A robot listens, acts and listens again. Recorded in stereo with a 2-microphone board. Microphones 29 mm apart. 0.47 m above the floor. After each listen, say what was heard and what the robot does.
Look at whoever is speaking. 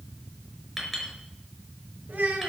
The child speaking: about 65° right or 115° right. Turn 65° right.
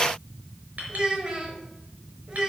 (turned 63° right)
So it is at 35° right. Turn 35° right.
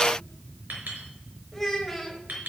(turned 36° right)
Found it: a child speaking, straight ahead.